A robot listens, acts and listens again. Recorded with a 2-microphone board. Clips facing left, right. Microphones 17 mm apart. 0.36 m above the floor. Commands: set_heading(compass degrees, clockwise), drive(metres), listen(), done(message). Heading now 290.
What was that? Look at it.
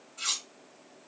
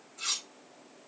set_heading(260)
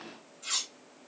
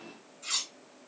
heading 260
done("Facing the cutlery clinking.")